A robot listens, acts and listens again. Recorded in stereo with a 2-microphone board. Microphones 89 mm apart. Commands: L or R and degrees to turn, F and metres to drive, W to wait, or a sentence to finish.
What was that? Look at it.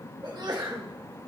R50
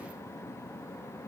W
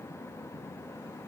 I heard a sneeze, but can't make it out now. It was about straight ahead or 80° right.